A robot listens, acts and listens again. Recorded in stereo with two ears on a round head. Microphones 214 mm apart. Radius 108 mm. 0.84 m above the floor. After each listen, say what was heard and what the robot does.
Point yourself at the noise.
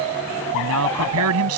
The man speaking: about 75° right or 105° right. Turn 75° right.
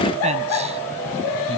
Keep listening.
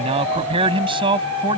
So it is at 20° right. Turn 20° right.
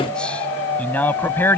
The man speaking is now 10° left. Turn 10° left.
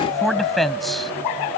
Facing the man speaking.